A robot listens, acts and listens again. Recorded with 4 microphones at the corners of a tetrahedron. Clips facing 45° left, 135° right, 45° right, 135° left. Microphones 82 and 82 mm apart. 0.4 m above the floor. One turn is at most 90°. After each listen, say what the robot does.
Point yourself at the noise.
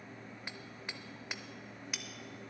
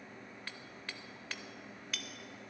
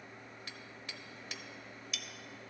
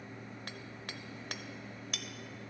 Turn 90° left.
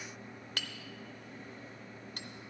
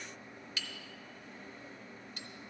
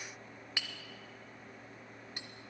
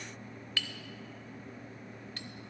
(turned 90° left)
Turn 25° left.
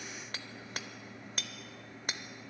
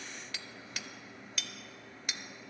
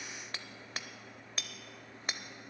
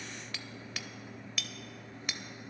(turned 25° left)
Found it: hammering, straight ahead.